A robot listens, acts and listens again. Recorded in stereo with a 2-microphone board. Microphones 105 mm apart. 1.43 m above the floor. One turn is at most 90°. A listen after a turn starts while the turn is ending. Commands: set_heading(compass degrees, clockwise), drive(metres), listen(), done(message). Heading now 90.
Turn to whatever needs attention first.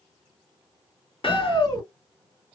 set_heading(55)
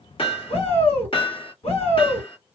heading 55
set_heading(325)
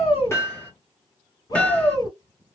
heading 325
set_heading(280)
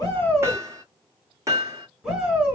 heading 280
done("Found it: a shout, straight ahead.")